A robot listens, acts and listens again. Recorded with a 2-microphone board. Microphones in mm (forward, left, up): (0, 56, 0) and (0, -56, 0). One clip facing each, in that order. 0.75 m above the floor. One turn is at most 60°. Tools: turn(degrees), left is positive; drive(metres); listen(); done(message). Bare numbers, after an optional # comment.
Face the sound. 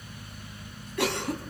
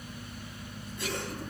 # The cough: about 70° left or 110° left.
turn(60)
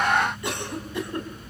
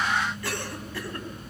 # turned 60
# So it is at 20° left.
turn(20)
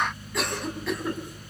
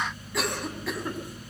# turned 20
done("Found it: a cough, straight ahead, over 4 m away.")